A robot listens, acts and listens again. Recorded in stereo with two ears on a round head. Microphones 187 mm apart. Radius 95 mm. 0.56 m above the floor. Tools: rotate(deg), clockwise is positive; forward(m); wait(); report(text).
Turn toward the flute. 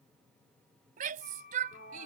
rotate(-40)
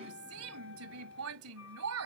rotate(-100)
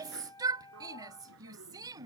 rotate(-15)
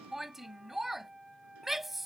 report("Found it: a flute, straight ahead.")